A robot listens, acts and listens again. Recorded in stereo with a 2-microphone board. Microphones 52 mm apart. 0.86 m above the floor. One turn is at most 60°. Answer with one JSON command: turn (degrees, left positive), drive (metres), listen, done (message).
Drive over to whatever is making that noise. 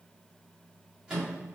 {"turn": -30}
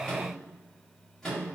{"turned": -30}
{"turn": 15}
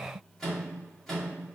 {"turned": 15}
{"drive": 1.0}
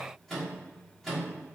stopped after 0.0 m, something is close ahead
{"done": "Something is in my way. I am facing the microwave but have not reached it."}